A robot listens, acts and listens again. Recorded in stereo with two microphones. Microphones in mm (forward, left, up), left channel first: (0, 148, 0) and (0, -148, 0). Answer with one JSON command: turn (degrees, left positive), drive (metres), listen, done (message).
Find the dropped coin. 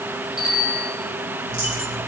{"turn": 40}
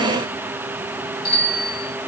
{"listen": true}
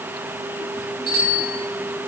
{"done": "I heard a dropped coin, but can't make it out now. It was about straight ahead or 100° left."}